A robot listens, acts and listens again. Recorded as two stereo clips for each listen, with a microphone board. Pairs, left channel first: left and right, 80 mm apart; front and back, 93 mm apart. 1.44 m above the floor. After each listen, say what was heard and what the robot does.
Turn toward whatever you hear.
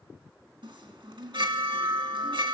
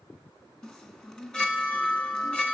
The chime: 80° right. Turn 80° right.
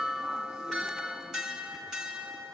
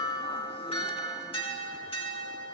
Found it: a chime, straight ahead, 2 to 4 m away.